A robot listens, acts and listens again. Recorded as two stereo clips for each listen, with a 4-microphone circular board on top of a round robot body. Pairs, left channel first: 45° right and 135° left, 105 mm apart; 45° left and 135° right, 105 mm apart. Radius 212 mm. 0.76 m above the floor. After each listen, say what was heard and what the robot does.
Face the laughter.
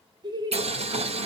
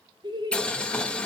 The laughter: straight behind. Turn 180° left.
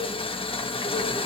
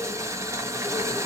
Keep listening.
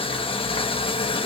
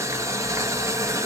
Keep listening.
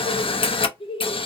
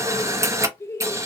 The laughter is now 20° right. Turn 20° right.
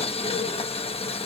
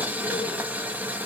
Keep listening.
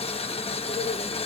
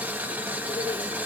Keep listening.
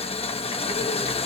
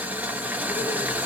I heard laughter from this way, but can't make it out now.